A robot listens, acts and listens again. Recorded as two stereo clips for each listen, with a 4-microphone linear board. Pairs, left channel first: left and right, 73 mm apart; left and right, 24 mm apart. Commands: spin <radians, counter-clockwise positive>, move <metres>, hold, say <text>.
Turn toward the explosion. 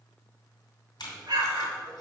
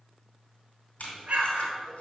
spin -1.13
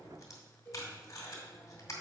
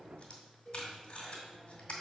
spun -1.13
hold
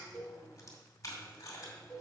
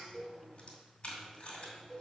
say I heard an explosion, but can't make it out now. It was about straight ahead or 50° right.